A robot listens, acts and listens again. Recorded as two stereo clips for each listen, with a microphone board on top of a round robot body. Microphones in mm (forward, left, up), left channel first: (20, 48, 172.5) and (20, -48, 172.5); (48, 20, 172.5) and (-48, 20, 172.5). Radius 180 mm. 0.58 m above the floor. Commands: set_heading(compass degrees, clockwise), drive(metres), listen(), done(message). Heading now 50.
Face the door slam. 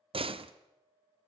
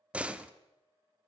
set_heading(155)
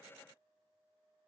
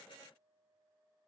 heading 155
done("I heard a door slam from this way, but can't make it out now.")